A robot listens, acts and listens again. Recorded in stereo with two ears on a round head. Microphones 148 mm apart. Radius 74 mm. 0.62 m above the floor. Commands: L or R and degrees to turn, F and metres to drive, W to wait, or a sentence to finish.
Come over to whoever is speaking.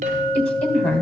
L30
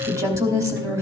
R20
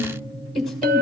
F1.0
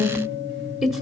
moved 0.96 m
F1.0
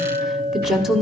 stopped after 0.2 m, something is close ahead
Arrived at the woman speaking, straight ahead.